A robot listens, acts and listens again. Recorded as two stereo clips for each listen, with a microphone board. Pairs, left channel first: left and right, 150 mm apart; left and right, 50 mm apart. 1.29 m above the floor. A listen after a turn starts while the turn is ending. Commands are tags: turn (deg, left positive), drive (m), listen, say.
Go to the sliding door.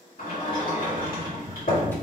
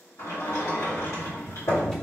<turn deg="70"/>
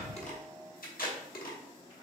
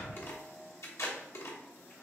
<listen/>
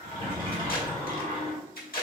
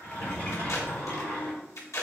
<turn deg="35"/>
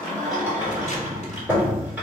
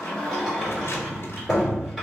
<turn deg="-10"/>
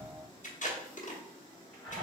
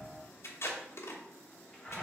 <drive m="1.0"/>
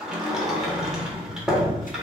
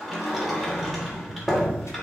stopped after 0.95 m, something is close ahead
<say>Arrived at the sliding door, straight ahead.</say>